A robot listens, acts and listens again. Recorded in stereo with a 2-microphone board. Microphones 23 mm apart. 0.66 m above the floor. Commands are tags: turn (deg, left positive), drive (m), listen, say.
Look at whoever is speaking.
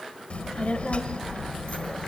<turn deg="70"/>
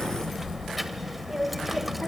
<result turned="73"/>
<say>Found it: a child speaking, straight ahead.</say>